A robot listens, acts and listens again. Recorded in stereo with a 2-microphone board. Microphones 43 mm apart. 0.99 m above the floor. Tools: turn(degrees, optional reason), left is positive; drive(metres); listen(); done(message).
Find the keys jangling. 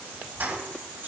turn(degrees=-60, reason="The keys jangling: about 60° right or 120° right.")
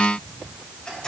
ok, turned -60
turn(degrees=15, reason="So it is at 15° left.")
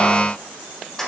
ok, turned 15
turn(degrees=10, reason="The keys jangling is now 10° left.")
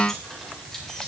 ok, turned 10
listen()
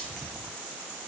listen()
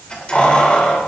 turn(degrees=25, reason="The keys jangling is now 25° left.")
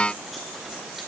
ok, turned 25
listen()
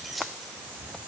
done("Facing the keys jangling, 2 to 4 m away.")